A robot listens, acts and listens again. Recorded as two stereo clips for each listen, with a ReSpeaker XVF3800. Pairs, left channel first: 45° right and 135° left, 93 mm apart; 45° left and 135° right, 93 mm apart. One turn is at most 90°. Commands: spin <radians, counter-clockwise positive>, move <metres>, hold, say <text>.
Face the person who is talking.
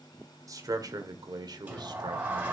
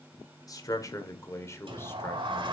spin 1.57
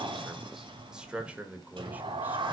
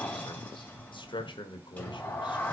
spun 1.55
spin 1.05
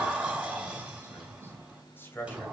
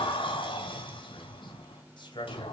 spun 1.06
spin 0.35
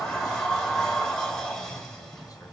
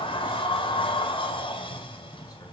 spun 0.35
hold
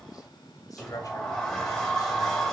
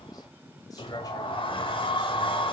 hold
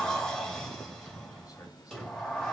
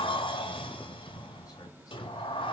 say I heard a man speaking from this way, but can't make it out now.